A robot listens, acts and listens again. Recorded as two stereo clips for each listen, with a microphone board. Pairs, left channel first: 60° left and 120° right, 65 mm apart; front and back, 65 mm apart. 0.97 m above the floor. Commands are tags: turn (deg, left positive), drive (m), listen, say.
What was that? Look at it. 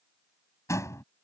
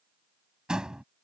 <turn deg="100"/>
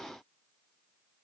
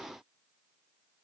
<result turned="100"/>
<say>Facing where the door slam came from. I can't hear it now.</say>